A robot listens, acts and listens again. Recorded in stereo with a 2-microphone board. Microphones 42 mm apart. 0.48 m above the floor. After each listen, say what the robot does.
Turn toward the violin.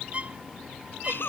Turn 35° right.
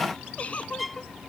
Facing the violin.